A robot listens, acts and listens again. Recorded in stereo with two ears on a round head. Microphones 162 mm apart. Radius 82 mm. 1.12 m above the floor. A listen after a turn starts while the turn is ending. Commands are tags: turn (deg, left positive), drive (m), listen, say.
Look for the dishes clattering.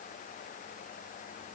<listen/>
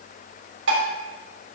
<turn deg="-90"/>
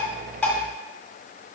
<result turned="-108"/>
<turn deg="20"/>
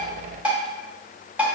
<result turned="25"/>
<say>Facing the dishes clattering.</say>